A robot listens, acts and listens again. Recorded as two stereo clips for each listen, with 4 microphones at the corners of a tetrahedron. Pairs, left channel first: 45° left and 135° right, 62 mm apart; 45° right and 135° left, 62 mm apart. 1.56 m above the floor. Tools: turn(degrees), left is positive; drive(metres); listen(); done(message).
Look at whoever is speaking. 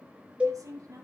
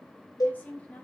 turn(degrees=-110)
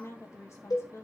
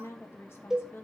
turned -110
done("Found it: a woman speaking, straight ahead.")